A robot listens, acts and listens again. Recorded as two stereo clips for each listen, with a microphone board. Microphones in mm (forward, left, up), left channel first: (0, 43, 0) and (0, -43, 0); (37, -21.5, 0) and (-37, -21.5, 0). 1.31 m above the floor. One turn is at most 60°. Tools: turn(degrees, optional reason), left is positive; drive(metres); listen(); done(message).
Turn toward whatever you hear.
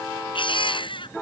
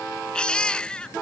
turn(degrees=60, reason="The baby crying: 80° left.")
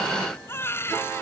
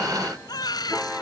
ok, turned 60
turn(degrees=25, reason="The baby crying is now 25° left.")
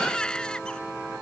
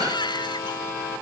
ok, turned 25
turn(degrees=10, reason="The baby crying is now 10° left.")
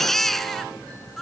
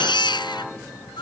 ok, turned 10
done("Facing the baby crying.")